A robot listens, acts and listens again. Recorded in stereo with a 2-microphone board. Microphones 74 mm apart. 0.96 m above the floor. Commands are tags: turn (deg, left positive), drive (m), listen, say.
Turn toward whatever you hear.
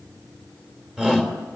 <turn deg="-30"/>
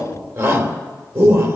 <turn deg="-135"/>
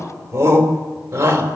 <turn deg="-35"/>
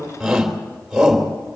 <say>Found it: a shout, straight ahead, 2 to 4 m away.</say>